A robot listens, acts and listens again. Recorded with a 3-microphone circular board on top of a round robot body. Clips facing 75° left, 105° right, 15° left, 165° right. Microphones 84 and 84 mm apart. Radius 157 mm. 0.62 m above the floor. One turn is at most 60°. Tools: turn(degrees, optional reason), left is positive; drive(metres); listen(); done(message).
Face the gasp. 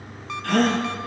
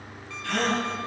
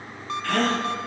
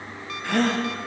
turn(degrees=60, reason="The gasp: 120° left.")
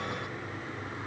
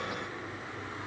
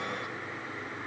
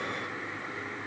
turn(degrees=60, reason="Nothing new. It was at 60° left.")
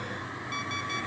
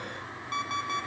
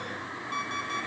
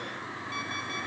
done("Facing where the gasp came from. I can't hear it now.")